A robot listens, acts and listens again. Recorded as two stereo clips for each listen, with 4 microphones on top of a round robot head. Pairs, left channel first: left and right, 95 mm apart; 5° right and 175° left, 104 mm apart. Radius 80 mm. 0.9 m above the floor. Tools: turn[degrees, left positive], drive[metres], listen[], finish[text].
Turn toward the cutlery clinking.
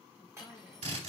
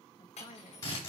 Thought: The cutlery clinking: 25° right.
Action: turn[-25]
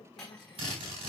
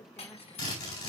Action: finish[Found it: cutlery clinking, straight ahead, over 4 m away.]